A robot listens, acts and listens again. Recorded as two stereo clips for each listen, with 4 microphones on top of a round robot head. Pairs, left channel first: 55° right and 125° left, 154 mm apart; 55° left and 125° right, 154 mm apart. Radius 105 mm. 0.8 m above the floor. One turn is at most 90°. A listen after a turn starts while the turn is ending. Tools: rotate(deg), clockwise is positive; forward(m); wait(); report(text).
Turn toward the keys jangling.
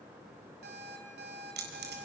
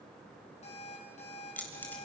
rotate(-90)
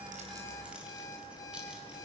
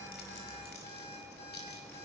rotate(-45)
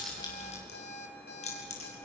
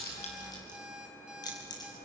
rotate(10)
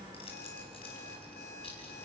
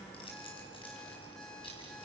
report("Found it: keys jangling, straight ahead.")